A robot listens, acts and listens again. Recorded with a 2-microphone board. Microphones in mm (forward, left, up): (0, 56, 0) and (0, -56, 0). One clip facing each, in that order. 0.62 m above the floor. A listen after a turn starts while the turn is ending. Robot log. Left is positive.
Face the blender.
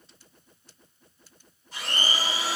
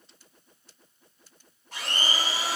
cmd yaw -90
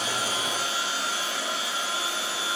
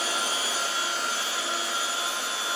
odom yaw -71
note: So it is at 25° right.
cmd yaw -25
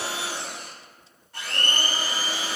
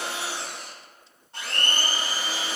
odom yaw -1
note: The blender is now 25° right.
cmd yaw -25
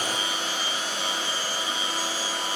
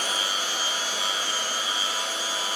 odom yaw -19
end: Facing the blender, 1 to 2 m away.